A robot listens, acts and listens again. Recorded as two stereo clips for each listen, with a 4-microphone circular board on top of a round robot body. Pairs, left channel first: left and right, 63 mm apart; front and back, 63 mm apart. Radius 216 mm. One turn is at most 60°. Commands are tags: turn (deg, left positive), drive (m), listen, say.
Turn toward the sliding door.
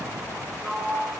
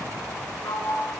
<say>Facing the sliding door, over 4 m away.</say>